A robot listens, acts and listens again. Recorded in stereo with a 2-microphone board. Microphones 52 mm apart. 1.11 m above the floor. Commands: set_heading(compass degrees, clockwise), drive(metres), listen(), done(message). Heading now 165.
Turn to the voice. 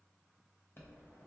listen()
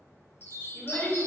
set_heading(120)
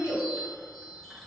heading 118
set_heading(33)
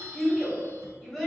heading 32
done("Facing the child speaking, 1 to 2 m away.")